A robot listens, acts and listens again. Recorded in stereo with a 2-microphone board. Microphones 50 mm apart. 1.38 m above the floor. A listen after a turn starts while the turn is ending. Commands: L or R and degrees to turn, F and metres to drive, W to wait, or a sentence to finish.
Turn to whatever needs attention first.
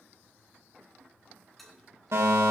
R70
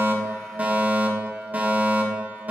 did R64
R35
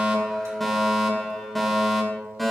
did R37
Found it: a fire alarm, straight ahead, 2 to 4 m away.